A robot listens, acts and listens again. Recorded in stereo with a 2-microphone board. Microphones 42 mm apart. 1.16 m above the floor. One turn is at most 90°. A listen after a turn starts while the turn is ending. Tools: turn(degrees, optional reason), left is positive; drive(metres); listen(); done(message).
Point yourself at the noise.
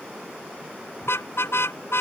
turn(degrees=90)
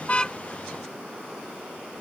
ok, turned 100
turn(degrees=-10, reason="Nothing new. It was at 10° right.")
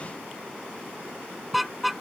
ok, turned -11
done("Found it: a car horn, straight ahead.")